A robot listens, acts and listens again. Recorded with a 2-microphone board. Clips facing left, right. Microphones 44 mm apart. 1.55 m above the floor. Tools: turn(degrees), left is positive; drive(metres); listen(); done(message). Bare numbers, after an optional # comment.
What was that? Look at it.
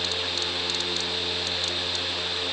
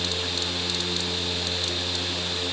listen()
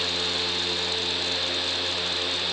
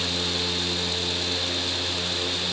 listen()
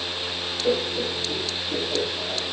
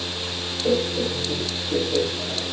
turn(30)
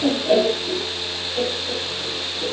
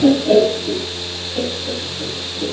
# So it is at 15° right.
turn(-15)
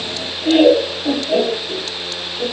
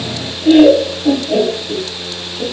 done("Facing the laughter, 2 to 4 m away.")